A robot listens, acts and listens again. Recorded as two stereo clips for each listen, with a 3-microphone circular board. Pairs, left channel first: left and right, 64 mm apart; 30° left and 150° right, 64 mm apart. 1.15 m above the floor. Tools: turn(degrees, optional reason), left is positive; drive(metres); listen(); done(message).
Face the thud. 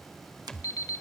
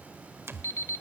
turn(degrees=170, reason="The thud: 170° left.")
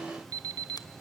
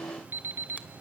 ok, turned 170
done("Facing where the thud came from. I can't hear it now.")